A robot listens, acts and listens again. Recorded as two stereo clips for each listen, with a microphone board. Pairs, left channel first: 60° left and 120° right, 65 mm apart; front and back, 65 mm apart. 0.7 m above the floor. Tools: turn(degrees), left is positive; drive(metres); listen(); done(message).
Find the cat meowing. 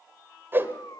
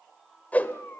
turn(degrees=55)
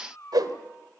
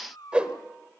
turn(degrees=15)
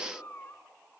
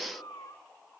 done("Found it: a cat meowing, straight ahead, 2 to 4 m away.")